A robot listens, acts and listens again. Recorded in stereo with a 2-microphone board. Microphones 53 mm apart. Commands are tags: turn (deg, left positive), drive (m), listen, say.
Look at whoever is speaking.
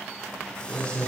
<turn deg="15"/>
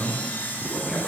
<turn deg="-30"/>
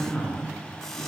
<turn deg="15"/>
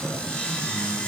<say>Facing the man speaking.</say>